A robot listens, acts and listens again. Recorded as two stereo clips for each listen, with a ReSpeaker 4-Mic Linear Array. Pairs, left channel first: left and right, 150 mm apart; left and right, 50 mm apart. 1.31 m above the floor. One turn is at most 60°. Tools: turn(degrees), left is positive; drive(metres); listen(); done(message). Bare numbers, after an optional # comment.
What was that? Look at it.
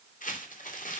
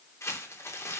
# The crumpling: about 65° left or 115° left.
turn(60)
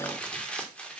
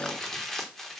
# So it is at 10° left.
turn(10)
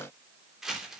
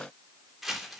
done("Found it: crumpling, straight ahead, 2 to 4 m away.")